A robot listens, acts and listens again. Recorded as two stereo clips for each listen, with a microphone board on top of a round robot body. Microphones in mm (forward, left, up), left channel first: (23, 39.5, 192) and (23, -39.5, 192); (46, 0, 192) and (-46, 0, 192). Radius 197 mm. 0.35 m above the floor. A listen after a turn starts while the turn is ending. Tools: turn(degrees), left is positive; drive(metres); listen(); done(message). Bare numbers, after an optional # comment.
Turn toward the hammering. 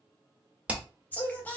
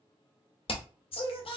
# The hammering: 15° right.
turn(-15)
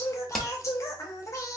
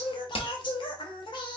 done("Facing the hammering, 1 to 2 m away.")